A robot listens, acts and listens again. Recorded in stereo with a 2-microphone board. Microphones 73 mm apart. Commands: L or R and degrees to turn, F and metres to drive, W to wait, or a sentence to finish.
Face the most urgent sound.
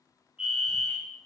R30
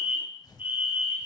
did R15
R155
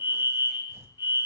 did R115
R40
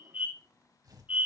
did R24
R20
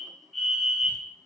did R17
Facing the fire alarm, over 4 m away.